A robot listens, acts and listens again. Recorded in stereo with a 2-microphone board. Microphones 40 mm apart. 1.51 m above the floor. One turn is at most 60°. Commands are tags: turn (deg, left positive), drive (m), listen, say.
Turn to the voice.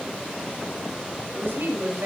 <turn deg="-60"/>
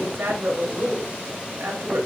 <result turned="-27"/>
<turn deg="-60"/>
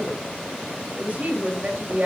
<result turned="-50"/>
<turn deg="-40"/>
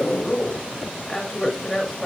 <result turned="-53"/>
<turn deg="15"/>
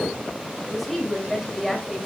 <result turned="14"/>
<say>Found it: a woman speaking, straight ahead, 2 to 4 m away.</say>